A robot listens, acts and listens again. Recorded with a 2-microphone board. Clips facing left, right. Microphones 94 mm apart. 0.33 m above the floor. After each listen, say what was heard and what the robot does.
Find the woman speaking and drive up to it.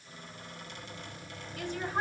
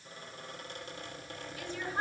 The woman speaking: about 55° left or 125° left. Turn 55° left.
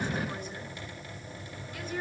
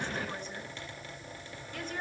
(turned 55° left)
Drive 1.0 m forward.
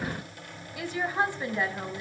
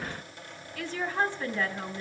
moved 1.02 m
The woman speaking is now 15° left. Turn 15° left.
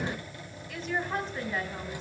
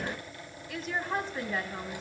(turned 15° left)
Drive 1.0 m forward.
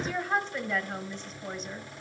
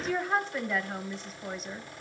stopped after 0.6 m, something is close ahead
Arrived at the woman speaking, straight ahead.